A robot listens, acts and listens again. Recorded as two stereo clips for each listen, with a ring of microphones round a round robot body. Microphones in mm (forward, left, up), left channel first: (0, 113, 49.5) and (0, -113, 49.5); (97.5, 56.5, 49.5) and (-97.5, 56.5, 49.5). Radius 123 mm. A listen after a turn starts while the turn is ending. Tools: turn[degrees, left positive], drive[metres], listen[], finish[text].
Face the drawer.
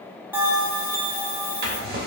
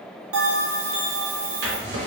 Thought: The drawer: 140° right.
Action: turn[-140]
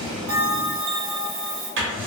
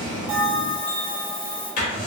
Thought: The drawer is now 50° right.
Action: turn[-50]
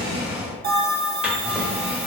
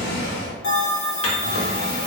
Action: finish[Found it: a drawer, straight ahead, under 1 m away.]